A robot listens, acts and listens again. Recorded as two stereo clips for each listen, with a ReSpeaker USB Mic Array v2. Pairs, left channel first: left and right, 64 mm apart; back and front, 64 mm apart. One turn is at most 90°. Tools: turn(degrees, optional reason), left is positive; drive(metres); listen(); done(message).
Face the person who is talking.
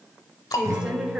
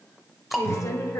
turn(degrees=-90, reason="The woman speaking: 165° right.")
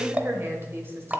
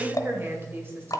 turn(degrees=-45, reason="The woman speaking is now 45° right.")
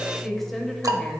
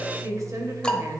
done("Found it: a woman speaking, straight ahead.")